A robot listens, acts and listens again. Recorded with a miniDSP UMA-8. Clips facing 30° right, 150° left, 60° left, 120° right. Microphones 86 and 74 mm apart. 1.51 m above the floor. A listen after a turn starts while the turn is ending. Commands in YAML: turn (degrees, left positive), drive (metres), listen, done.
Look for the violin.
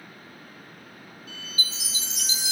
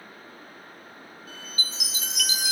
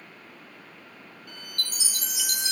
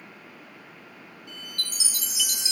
turn: 100
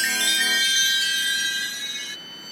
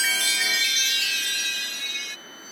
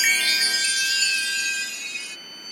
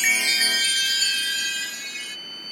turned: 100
turn: -10
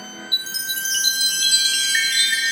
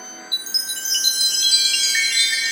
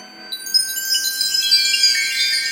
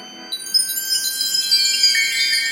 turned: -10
listen: true
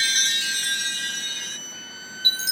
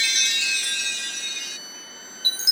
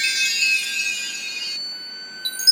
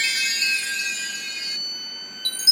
done: "Found it: a violin, straight ahead."